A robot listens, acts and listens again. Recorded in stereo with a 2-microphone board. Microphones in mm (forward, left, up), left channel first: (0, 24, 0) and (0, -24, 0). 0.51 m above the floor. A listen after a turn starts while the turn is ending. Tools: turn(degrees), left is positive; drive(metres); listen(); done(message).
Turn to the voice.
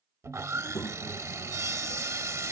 turn(degrees=40)
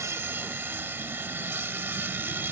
listen()
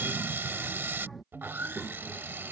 done("Found it: a child speaking, straight ahead.")